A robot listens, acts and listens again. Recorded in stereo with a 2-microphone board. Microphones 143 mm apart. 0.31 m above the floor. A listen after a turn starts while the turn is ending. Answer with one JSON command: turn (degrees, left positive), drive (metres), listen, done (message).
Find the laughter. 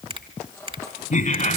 {"turn": 65}
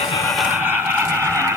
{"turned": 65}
{"turn": 15}
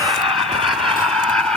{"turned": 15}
{"done": "Facing the laughter, 1 to 2 m away."}